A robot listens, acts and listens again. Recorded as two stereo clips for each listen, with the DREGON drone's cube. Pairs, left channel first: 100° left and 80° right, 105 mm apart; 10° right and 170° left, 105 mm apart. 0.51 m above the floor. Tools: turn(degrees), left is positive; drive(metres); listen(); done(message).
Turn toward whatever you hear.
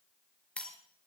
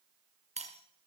turn(degrees=180)
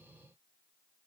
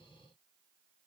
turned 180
done("Facing where the breaking glass came from. I can't hear it now.")